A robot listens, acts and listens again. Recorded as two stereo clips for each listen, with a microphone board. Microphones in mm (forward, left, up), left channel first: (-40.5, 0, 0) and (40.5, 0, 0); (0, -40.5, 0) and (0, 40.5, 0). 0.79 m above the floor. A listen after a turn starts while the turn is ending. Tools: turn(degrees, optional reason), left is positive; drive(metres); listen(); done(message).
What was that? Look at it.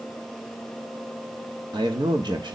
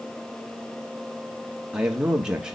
turn(degrees=10, reason="The man speaking: 10° left.")
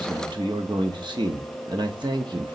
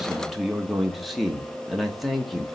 done("Found it: a man speaking, straight ahead, 1 to 2 m away.")